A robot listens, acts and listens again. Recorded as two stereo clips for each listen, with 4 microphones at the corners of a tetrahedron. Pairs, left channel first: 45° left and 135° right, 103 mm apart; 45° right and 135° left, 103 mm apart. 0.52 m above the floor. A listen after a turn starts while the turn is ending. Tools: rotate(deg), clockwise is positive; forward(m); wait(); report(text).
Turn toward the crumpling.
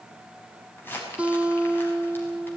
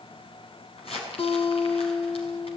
rotate(25)
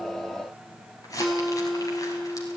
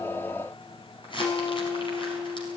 rotate(10)
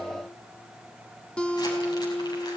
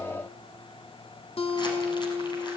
wait()
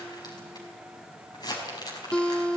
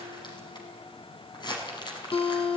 report("Facing the crumpling.")